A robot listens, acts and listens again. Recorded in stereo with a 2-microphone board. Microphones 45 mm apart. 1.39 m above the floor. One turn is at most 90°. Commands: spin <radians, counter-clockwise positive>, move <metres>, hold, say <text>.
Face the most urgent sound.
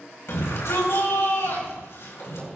spin 1.57
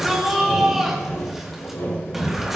say Found it: a shout, straight ahead.